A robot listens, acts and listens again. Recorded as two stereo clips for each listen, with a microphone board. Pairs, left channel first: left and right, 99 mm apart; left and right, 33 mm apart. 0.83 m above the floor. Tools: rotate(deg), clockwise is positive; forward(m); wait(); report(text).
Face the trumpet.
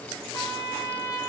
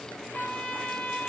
rotate(-35)
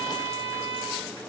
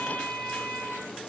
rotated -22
rotate(-125)
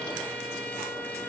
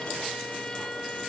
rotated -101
rotate(-25)
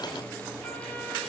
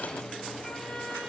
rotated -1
rotate(-20)
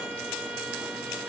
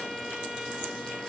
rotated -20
wait()
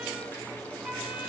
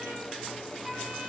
report("Facing where the trumpet came from. I can't hear it now.")